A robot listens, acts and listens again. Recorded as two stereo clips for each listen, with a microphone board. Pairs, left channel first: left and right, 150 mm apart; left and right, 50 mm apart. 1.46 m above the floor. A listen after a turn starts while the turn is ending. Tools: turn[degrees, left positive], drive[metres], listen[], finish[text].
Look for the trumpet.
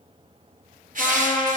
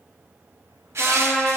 Thought: The trumpet: about 25° left or 155° left.
Action: turn[25]
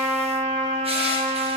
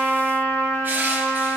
Thought: So it is at 125° left.
Action: turn[125]
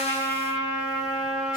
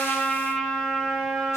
Action: finish[Facing the trumpet, 1 to 2 m away.]